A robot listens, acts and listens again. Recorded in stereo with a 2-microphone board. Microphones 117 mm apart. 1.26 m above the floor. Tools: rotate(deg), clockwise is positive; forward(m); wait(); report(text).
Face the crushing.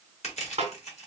rotate(-65)
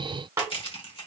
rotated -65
rotate(-50)
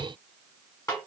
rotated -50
wait()
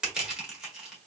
report("Found it: crushing, straight ahead.")